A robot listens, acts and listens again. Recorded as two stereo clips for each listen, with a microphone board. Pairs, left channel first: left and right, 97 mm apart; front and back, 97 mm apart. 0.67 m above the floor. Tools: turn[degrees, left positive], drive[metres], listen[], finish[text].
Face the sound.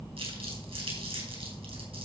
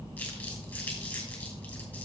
Thought: The crumpling: 75° right.
Action: turn[-75]
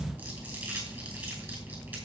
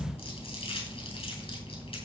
Thought: The crumpling is now 20° right.
Action: turn[-20]
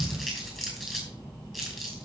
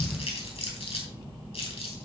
Action: finish[Facing the crumpling.]